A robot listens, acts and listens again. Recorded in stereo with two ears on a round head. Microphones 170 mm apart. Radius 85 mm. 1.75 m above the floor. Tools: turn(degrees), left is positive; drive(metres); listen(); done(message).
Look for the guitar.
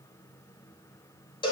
listen()
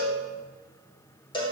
listen()
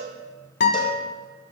turn(degrees=60)
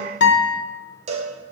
turn(degrees=60)
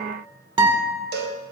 turn(degrees=-25)
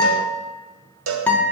done("Found it: a guitar, straight ahead.")